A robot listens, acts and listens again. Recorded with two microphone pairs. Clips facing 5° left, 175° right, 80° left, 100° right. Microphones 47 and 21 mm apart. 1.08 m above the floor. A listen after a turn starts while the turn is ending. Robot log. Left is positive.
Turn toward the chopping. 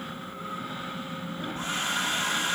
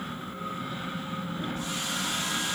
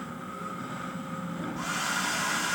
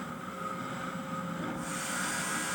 cmd idle
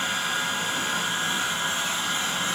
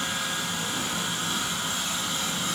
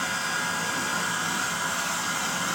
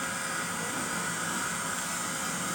cmd idle
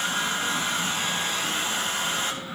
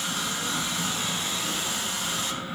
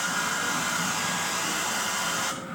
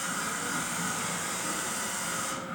end: I can't make out chopping, only a hair dryer.